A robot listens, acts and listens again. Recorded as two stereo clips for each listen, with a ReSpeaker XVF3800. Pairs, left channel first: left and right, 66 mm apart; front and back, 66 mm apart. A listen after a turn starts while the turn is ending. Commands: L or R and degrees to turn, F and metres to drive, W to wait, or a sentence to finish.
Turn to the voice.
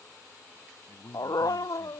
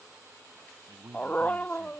L135
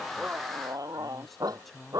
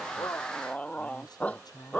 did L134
Found it: a man speaking, straight ahead.